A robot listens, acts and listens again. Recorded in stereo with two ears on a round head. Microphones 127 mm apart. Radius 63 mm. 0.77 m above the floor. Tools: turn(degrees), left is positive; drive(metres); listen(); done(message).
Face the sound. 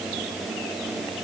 listen()
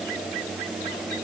listen()
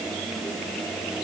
done("I can't make out anything to turn to.")